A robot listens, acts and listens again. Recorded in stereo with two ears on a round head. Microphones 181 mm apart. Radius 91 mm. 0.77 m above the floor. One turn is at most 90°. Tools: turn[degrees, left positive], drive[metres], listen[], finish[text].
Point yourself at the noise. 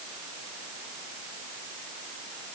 Action: listen[]
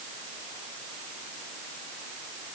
Action: listen[]
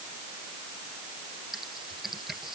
Action: turn[30]
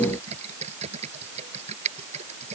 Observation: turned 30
Thought: So it is at 30° right.
Action: turn[-30]
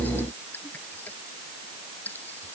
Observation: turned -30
Thought: The typing on a keyboard is now 10° left.
Action: turn[10]
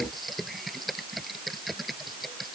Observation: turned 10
Action: finish[Facing the typing on a keyboard.]